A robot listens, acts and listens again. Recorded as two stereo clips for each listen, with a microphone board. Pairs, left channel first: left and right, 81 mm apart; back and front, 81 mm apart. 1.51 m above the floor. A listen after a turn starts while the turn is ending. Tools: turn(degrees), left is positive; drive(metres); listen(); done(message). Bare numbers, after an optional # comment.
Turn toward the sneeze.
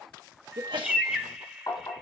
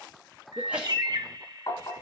# The sneeze: 75° right.
turn(-75)
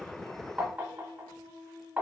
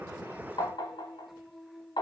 done("Facing where the sneeze came from. I can't hear it now.")